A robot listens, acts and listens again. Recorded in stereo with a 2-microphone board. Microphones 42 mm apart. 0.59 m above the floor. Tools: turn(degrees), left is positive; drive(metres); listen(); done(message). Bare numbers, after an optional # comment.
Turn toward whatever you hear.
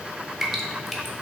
turn(-30)
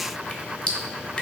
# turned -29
# So it is at 25° left.
turn(25)
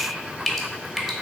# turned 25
done("Found it: dripping, straight ahead.")